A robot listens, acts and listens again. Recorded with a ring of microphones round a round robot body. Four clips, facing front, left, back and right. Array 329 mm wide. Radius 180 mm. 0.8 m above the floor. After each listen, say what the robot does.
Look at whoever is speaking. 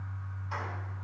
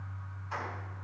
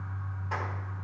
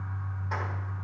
Keep listening.
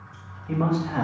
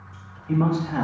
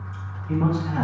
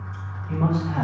Turn 20° left.
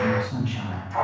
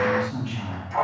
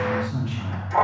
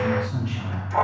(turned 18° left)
Turn 10° right.
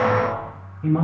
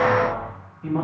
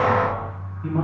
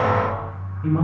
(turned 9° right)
Turn 10° right.
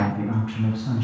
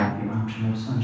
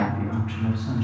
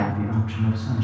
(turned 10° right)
Found it: a man speaking, straight ahead, over 4 m away.